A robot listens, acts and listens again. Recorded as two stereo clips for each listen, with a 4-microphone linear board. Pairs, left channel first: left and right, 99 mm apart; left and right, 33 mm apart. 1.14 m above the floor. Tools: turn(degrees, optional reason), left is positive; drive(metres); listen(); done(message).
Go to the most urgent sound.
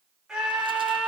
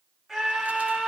turn(degrees=-30)
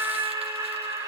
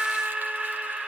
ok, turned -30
turn(degrees=-145, reason="So it is at 145° right.")
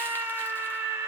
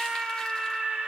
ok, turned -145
turn(degrees=-30, reason="The scream is now 30° right.")
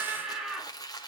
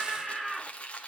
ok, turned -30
turn(degrees=-10, reason="The scream is now 10° right.")
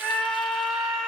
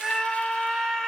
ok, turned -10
drive(metres=1.0)
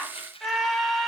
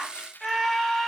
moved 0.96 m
drive(metres=1.0)
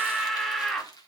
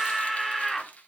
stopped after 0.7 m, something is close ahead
done("I am next to the scream.")